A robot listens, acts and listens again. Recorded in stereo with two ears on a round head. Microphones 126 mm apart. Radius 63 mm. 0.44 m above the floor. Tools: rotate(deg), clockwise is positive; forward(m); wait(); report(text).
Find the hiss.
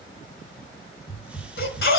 rotate(30)
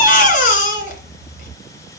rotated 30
rotate(-20)
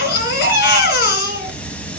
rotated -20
rotate(-10)
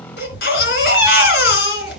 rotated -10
wait()
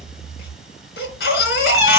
wait()
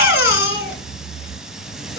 report("Found it: a hiss, straight ahead, under 1 m away.")